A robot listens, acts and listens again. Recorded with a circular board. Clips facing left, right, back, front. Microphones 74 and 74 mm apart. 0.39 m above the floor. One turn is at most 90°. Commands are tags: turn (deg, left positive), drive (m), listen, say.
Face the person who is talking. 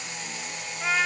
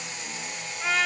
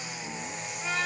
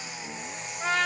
<listen/>
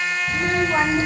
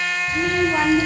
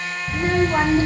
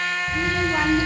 <turn deg="90"/>
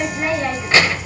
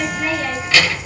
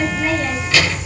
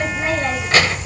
<turn deg="40"/>
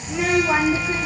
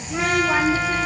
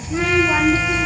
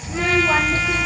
<turn deg="25"/>
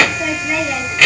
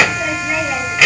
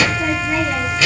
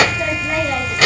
<turn deg="-10"/>
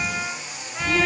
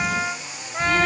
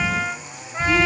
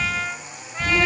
<say>Facing the child speaking.</say>